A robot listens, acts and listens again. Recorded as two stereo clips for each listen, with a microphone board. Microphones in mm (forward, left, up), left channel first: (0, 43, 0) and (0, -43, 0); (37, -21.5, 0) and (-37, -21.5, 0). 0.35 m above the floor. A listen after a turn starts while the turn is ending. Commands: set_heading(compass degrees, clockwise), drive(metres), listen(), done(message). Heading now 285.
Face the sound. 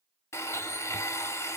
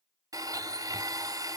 set_heading(140)
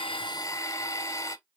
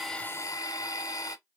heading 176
set_heading(141)
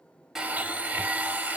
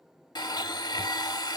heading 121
set_heading(141)
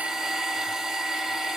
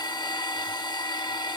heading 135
done("Found it: a blender, straight ahead.")